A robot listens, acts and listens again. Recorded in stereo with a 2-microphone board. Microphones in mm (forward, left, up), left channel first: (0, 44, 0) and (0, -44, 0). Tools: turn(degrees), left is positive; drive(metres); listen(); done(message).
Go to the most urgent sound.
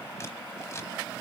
listen()
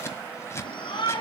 turn(degrees=70)
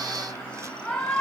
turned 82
turn(degrees=10)
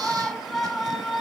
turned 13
drive(metres=1.0)
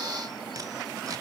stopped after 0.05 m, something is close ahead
listen()
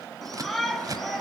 done("Blocked. The shout is further on, straight ahead.")